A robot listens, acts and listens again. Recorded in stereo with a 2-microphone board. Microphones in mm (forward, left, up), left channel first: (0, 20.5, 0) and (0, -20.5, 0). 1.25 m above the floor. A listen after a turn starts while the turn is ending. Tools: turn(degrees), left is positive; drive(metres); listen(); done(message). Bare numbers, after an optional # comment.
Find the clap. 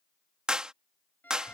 # The clap: about 20° right or 160° right.
turn(-20)
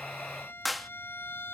done("Facing the clap.")